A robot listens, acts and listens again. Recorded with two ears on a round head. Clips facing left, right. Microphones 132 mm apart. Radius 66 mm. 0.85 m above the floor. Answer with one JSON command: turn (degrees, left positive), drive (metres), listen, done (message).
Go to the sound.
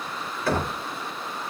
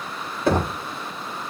{"turn": -15}
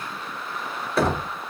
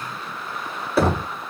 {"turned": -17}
{"drive": 1.0}
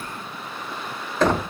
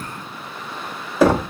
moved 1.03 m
{"turn": -10}
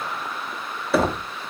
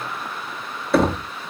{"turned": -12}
{"drive": 1.0}
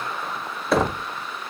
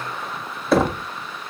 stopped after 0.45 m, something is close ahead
{"done": "Arrived at the knocking, straight ahead."}